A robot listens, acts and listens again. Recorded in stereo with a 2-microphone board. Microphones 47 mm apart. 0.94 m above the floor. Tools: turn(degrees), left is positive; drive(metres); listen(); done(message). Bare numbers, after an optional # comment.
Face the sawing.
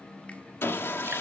# The sawing: about 60° left or 120° left.
turn(60)
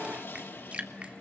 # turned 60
# So it is at 60° left.
turn(60)
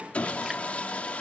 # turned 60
# The sawing is now 30° left.
turn(30)
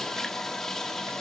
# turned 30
# The sawing is now 10° left.
turn(10)
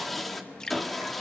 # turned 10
done("Facing the sawing, 1 to 2 m away.")